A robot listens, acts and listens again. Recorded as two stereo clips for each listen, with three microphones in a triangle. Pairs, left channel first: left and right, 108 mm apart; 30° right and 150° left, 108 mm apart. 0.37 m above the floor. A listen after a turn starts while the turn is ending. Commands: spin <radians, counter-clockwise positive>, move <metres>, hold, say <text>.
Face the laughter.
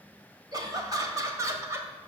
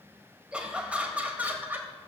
spin -2.53
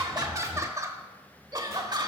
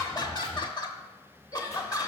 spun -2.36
spin -1.22
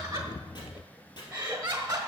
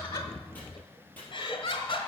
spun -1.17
spin -0.52
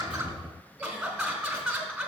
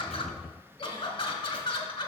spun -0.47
say Facing the laughter, 1 to 2 m away.